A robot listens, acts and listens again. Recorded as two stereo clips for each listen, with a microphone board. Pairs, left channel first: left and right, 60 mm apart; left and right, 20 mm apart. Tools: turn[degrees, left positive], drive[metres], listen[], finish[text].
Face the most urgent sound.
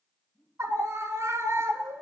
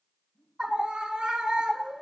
Thought: The scream: about 60° right or 120° right.
Action: turn[-60]
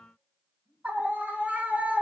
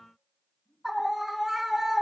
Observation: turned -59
Thought: So it is at 30° right.
Action: turn[-30]
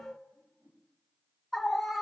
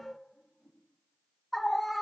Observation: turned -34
Action: finish[Found it: a scream, straight ahead, 1 to 2 m away.]